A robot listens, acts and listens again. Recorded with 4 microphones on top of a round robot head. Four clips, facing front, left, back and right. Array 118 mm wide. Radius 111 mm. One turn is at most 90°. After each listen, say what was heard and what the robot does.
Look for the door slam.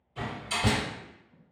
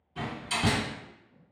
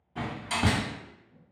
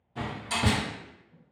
The door slam: 160° right. Turn 90° right.
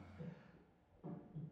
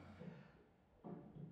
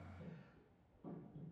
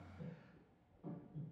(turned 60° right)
Nothing new. It was at 100° right. Turn 90° right.
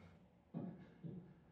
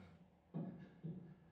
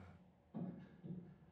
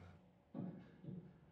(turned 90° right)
Nothing new. It was at 10° right. Turn 10° right.
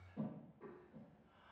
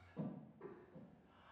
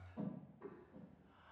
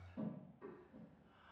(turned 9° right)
Facing where the door slam came from. I can't hear it now.